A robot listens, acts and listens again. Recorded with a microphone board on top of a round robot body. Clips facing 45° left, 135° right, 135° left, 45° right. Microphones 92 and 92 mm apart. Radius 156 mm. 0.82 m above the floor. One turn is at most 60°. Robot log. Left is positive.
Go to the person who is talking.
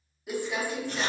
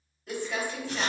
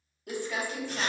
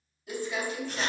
cmd idle
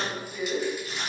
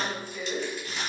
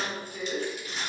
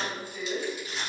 cmd idle
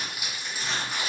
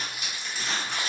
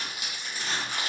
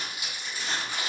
end: I can't make out anyone speaking, only crumpling.